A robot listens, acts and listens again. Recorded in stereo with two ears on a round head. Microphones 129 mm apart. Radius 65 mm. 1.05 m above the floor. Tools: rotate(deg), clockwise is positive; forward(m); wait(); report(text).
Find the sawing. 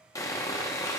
rotate(-25)
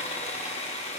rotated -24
rotate(-135)
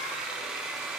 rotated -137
report("Facing the sawing, 1 to 2 m away.")